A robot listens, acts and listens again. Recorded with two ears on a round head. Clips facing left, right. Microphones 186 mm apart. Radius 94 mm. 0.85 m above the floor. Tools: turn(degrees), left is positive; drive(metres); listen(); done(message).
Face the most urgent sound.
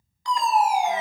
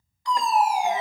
turn(degrees=65)
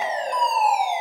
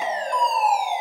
turn(degrees=20)
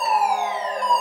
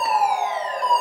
done("Found it: a fire alarm, straight ahead, 2 to 4 m away.")